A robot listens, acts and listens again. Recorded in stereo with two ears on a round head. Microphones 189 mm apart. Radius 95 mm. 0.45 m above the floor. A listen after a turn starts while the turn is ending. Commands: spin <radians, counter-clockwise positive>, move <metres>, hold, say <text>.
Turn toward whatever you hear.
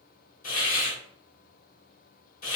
spin 0.70
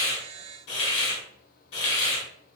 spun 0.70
spin 1.48
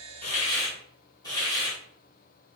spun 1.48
spin 0.35
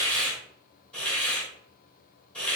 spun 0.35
say Facing the hiss.